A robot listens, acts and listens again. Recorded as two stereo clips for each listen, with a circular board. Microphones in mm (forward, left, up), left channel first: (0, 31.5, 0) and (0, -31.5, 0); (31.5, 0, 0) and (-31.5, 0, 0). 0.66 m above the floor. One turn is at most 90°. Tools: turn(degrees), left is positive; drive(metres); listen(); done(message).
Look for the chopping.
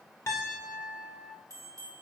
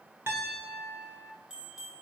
listen()
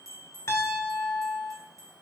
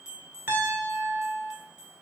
listen()
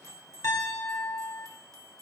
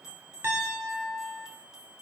done("I can't make out chopping to turn to.")